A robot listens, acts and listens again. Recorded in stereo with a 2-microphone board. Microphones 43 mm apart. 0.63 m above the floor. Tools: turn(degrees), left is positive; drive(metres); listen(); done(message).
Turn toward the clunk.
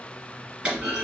turn(degrees=-25)
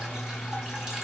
listen()
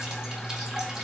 done("I heard a clunk, but can't make it out now. It was about straight ahead or 130° right.")